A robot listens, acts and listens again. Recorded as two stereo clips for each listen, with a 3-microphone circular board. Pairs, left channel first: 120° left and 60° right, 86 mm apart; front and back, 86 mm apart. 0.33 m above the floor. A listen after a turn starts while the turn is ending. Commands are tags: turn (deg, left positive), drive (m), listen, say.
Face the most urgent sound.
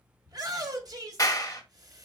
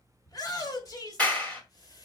<turn deg="-35"/>
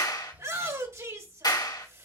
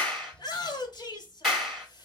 <turn deg="-15"/>
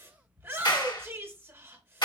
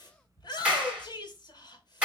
<say>Found it: a shout, straight ahead, 1 to 2 m away.</say>